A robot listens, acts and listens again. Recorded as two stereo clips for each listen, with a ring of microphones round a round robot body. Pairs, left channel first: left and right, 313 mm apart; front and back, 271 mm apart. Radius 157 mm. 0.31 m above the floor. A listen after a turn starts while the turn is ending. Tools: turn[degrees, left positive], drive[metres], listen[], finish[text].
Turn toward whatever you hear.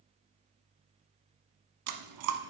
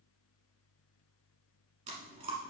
Thought: The chewing: 110° right.
Action: turn[-110]
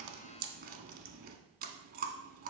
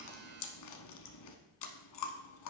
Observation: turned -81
Thought: The chewing is now 25° right.
Action: turn[-25]
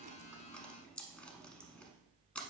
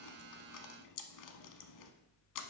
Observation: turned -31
Action: finish[Found it: chewing, straight ahead.]